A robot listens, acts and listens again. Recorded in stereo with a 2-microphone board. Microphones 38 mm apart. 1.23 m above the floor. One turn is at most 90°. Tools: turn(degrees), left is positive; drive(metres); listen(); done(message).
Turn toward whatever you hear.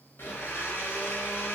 turn(degrees=90)
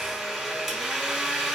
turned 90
done("Found it: a blender, straight ahead.")